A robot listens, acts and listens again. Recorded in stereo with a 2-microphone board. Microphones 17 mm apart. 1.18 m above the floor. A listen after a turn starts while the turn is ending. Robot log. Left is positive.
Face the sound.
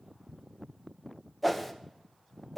cmd yaw +30
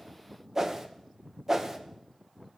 note: So it is at 30° right.
cmd yaw -30
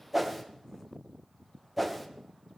end: Found it: a whoosh, straight ahead, 1 to 2 m away.